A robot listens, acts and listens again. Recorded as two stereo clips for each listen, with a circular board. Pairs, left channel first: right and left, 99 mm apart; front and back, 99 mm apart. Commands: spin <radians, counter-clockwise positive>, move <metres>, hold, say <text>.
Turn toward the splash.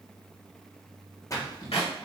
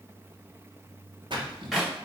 spin -2.53
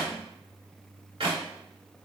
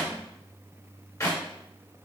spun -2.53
say Facing where the splash came from. I can't hear it now.